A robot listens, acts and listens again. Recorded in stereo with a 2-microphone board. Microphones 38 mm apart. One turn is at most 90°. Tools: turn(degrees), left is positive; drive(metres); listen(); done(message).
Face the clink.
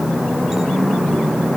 listen()
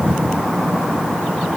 listen()
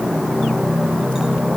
done("I can't make out a clink to turn to.")